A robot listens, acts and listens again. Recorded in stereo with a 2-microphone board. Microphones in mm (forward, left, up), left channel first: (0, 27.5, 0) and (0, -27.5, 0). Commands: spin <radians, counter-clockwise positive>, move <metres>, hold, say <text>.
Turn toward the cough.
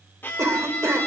spin -1.05
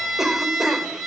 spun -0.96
say Facing the cough.